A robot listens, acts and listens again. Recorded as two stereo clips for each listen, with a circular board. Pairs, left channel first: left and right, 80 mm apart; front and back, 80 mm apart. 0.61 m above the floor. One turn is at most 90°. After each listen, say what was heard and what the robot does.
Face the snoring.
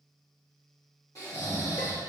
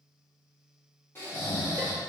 The snoring: 55° left. Turn 55° left.
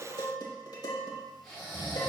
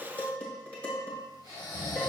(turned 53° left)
Found it: snoring, straight ahead, 1 to 2 m away.